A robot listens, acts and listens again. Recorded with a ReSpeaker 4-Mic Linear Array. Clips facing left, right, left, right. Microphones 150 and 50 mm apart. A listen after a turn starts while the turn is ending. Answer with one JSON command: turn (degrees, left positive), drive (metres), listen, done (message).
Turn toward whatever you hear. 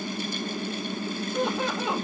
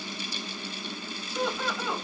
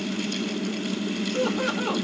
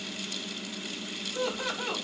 {"turn": 75}
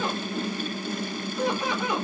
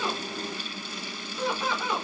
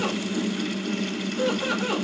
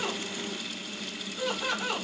{"turn": 15}
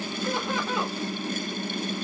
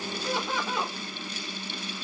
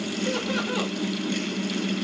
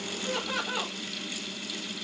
{"done": "Facing the laughter."}